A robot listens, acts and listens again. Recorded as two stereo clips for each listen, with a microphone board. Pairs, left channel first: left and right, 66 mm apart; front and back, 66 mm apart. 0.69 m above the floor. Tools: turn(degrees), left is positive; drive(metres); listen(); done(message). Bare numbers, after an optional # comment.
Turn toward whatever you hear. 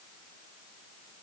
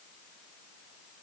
listen()
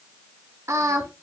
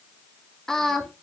# The singing: 85° right.
turn(-85)
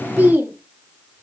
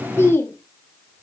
# The singing is now 40° right.
turn(-40)
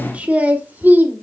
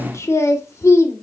# The singing is now 35° right.
turn(-35)
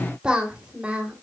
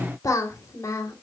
# The singing is now 20° right.
turn(-20)
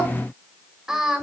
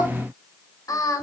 # The singing is now 10° right.
turn(-10)
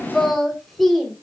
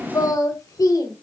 done("Found it: singing, straight ahead.")